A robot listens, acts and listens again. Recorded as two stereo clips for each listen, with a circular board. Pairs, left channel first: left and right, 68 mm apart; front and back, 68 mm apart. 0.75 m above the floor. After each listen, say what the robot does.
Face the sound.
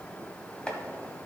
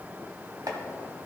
Turn 165° left.
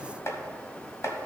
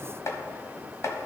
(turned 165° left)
Turn 45° left.
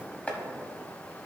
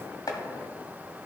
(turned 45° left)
Turn 20° left.
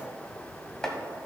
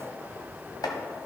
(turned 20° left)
Turn 10° left.
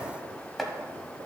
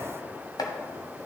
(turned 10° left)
Facing the chopping, 1 to 2 m away.